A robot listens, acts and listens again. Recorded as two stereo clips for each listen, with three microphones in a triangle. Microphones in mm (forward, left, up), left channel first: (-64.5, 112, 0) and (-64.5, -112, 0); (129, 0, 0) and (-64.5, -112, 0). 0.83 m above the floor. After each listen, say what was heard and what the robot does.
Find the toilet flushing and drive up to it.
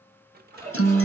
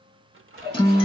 The toilet flushing: 170° left. Turn 170° left.
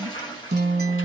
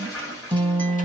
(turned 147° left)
The toilet flushing is now 20° left. Turn 20° left.
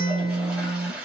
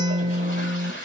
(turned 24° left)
Drive 1.0 m forward.
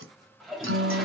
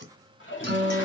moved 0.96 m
Drive 1.0 m forward.
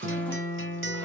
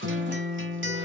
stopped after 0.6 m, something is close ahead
Keep listening.
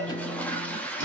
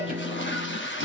Arrived at the toilet flushing, straight ahead.